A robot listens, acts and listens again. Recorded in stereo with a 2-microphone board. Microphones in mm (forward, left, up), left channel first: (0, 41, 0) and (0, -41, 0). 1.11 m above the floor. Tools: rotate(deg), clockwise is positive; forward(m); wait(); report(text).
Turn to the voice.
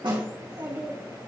rotate(45)
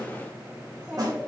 report("Facing the child speaking.")